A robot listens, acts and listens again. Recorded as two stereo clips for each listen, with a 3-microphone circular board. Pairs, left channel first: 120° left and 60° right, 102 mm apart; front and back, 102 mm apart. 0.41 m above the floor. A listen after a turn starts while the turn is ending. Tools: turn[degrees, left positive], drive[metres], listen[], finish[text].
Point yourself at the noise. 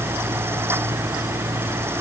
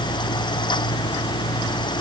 Action: listen[]
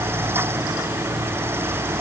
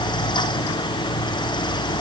Action: listen[]
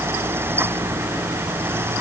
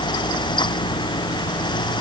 Action: finish[I can't make out anything.]